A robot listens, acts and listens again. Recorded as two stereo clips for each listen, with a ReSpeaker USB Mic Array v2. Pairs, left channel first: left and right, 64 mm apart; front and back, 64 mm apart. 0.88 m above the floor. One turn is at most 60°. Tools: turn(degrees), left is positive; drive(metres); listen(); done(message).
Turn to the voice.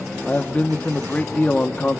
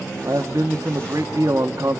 turn(degrees=60)
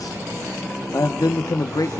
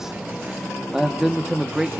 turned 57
turn(degrees=60)
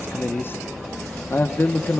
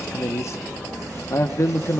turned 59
turn(degrees=40)
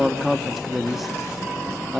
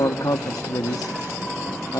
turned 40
done("Found it: a man speaking, straight ahead, 1 to 2 m away.")